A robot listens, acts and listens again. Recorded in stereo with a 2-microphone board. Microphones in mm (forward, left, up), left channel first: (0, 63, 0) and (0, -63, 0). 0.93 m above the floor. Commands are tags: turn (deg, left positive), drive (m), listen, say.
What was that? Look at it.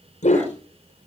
<turn deg="70"/>
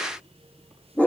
<turn deg="10"/>
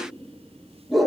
<say>Found it: a dog barking, straight ahead, over 4 m away.</say>